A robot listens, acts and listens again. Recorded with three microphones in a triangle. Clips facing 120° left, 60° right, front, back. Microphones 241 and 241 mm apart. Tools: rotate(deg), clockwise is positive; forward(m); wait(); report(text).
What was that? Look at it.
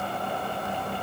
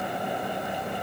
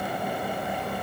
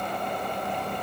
wait()
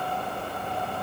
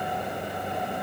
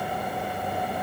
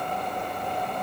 wait()
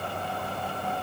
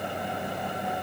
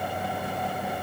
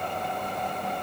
report("I can't make out anything to turn to.")